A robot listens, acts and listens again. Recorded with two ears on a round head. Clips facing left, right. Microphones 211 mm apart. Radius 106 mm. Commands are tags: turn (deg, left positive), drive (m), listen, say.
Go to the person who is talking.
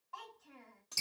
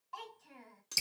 <turn deg="-55"/>
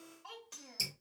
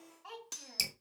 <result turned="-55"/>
<drive m="1.0"/>
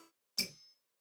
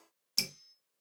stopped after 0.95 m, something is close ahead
<listen/>
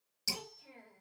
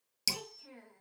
<turn deg="-10"/>
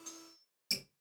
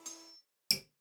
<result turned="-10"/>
<listen/>
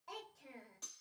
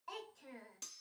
<say>Arrived at the child speaking, straight ahead.</say>